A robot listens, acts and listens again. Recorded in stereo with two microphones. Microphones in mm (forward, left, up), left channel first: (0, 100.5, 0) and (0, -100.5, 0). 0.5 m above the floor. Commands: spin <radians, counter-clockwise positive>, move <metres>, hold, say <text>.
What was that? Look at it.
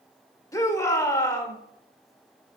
spin 0.26
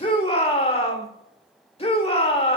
spin 2.62
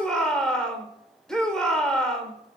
say Facing the shout, 1 to 2 m away.